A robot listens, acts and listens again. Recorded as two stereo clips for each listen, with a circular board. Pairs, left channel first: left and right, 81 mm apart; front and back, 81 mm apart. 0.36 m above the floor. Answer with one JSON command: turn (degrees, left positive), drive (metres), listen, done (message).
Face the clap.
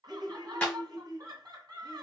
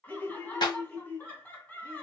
{"turn": 15}
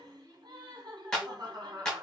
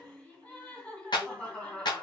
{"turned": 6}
{"turn": 10}
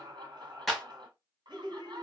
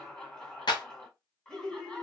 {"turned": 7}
{"done": "Facing the clap, 1 to 2 m away."}